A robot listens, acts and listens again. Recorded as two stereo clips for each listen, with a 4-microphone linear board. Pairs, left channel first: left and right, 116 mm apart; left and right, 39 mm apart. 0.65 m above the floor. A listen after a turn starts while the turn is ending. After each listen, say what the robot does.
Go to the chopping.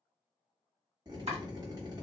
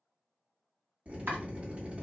Turn 65° right.
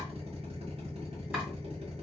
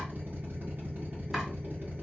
Keep listening.
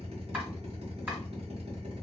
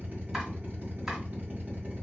Keep listening.
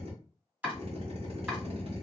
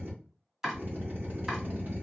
Turn 15° right.
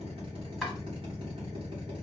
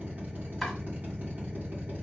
Keep listening.
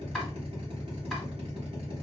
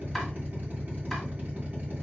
Keep listening.
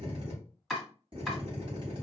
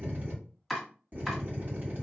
Drive 1.0 m forward.
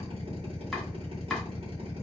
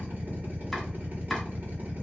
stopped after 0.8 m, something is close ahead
Keep listening.
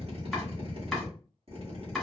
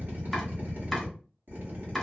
I am next to the chopping.